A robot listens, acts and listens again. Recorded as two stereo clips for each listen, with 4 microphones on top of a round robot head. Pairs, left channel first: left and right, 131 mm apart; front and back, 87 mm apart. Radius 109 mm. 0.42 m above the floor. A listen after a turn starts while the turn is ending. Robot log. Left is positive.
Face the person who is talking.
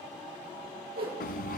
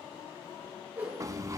cmd idle
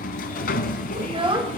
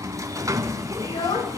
note: The child speaking: 40° right.
cmd yaw -40
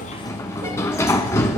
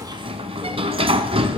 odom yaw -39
cmd idle
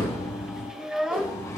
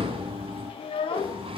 end: Found it: a child speaking, straight ahead, 1 to 2 m away.